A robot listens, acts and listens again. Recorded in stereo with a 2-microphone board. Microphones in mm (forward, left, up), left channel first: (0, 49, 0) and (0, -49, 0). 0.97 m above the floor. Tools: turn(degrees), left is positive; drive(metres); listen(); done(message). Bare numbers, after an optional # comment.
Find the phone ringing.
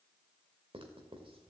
listen()
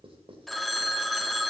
turn(30)
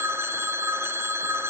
# So it is at 25° right.
turn(-25)
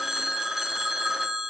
done("Facing the phone ringing.")